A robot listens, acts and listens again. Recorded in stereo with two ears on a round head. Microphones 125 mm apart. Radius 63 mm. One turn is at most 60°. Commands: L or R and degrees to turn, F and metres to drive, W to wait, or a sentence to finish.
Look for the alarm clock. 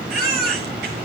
W
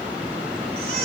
W
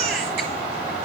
I can't make out an alarm clock to turn to.